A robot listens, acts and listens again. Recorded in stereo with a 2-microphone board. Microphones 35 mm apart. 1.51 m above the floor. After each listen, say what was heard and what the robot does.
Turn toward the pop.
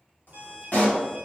The pop: about 45° left or 135° left. Turn 45° left.
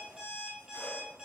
Keep listening.
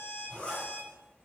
I heard a pop, but can't make it out now. It was about straight ahead or 90° left.